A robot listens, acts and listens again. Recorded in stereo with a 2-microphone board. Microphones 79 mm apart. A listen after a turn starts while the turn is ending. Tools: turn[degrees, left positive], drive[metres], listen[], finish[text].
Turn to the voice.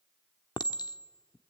Action: listen[]
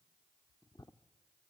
Action: listen[]
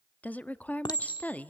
Thought: The woman speaking: about 20° left or 160° left.
Action: turn[20]
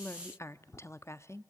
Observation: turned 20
Thought: So it is at 135° left.
Action: turn[135]
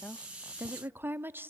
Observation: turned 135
Thought: The woman speaking is now 30° right.
Action: turn[-30]
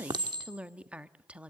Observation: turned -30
Thought: The woman speaking is now 20° right.
Action: turn[-20]
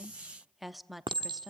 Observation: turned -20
Action: finish[Facing the woman speaking, under 1 m away.]